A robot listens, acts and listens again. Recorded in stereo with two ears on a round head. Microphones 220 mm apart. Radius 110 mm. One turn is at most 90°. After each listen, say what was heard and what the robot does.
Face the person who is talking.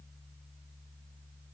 Keep listening.
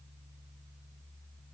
Keep listening.
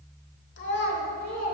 The child speaking: about 35° left or 145° left. Turn 35° left.
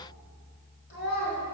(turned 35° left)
The child speaking: about 35° left or 145° left. Turn 35° left.
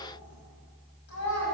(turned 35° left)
So it is at 120° left. Turn 90° left.
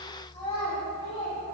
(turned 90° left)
The child speaking is now 25° left. Turn 25° left.
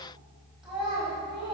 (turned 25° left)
Facing the child speaking, 1 to 2 m away.